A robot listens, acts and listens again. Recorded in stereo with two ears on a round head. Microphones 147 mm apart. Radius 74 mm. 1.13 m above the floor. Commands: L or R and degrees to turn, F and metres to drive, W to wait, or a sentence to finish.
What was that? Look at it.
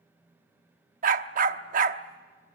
R50
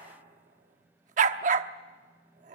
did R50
R60
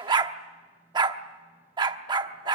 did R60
R30
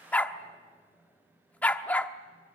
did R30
L10
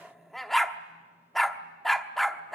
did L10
Found it: a dog barking, straight ahead.